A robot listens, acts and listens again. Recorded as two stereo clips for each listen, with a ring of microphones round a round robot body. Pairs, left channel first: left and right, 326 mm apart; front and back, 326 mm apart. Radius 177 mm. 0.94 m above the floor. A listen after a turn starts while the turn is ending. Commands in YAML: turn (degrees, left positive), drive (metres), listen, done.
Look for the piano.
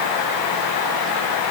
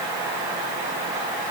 listen: true
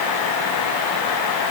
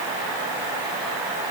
listen: true
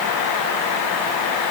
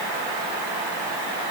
done: "I can't make out a piano to turn to."